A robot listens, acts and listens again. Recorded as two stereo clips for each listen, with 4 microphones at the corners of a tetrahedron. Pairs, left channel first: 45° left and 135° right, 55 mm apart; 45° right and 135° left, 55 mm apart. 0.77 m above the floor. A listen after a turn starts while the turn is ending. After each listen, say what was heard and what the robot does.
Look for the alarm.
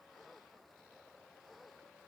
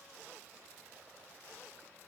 Keep listening.
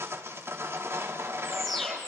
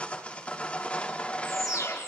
The alarm: 40° right. Turn 40° right.
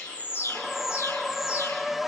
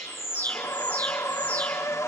The alarm is now 20° left. Turn 20° left.
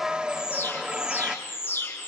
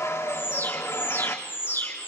Found it: an alarm, straight ahead, over 4 m away.